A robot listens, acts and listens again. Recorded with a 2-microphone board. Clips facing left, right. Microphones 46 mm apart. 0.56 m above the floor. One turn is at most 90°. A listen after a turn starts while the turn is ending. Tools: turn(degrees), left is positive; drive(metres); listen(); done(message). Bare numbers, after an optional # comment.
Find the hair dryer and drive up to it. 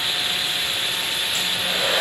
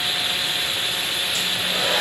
# The hair dryer: about 45° left or 135° left.
turn(45)
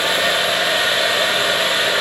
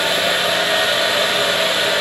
# So it is at 10° left.
turn(10)
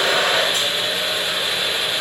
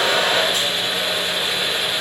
drive(1.0)
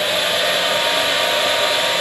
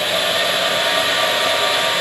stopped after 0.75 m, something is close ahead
# The hair dryer is now 10° right.
turn(-10)
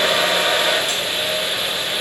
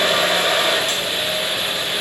done("Arrived at the hair dryer, straight ahead.")